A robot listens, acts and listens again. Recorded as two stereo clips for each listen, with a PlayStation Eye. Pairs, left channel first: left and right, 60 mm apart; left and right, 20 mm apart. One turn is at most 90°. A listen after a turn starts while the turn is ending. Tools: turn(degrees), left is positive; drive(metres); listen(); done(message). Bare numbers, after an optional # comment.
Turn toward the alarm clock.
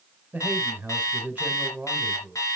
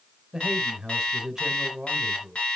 # The alarm clock: about 65° left or 115° left.
turn(65)
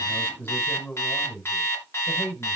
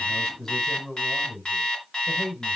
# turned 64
# So it is at 50° left.
turn(50)
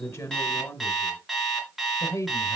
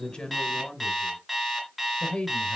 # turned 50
done("Found it: an alarm clock, straight ahead.")